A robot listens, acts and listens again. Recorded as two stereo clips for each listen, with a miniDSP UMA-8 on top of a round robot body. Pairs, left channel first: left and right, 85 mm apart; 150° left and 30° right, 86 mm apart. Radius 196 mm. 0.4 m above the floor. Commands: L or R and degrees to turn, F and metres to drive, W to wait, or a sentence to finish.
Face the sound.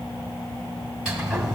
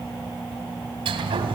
R10
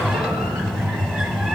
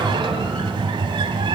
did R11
Found it: a sliding door, straight ahead, under 1 m away.